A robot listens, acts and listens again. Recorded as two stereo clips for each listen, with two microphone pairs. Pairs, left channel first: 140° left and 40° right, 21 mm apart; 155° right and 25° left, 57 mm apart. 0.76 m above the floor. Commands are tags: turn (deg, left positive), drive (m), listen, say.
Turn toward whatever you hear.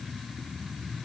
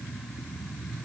<listen/>
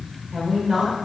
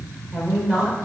<turn deg="-50"/>
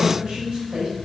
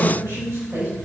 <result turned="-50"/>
<turn deg="-10"/>
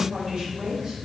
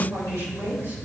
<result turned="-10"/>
<say>Facing the woman speaking, over 4 m away.</say>